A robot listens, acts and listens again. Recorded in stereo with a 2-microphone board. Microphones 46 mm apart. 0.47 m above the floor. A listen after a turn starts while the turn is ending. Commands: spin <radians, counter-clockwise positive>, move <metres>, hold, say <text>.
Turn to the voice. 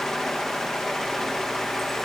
hold
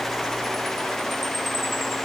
hold
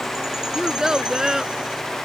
spin -0.52
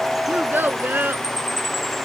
spin -2.36
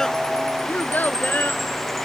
spin 0.70
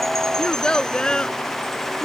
spin 0.35
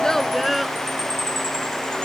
say Facing the child speaking.